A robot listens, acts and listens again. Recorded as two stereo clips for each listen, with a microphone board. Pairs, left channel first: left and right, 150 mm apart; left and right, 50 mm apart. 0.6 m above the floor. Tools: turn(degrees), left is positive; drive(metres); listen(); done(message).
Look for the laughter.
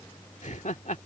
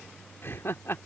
turn(degrees=55)
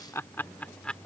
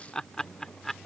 done("Found it: laughter, straight ahead.")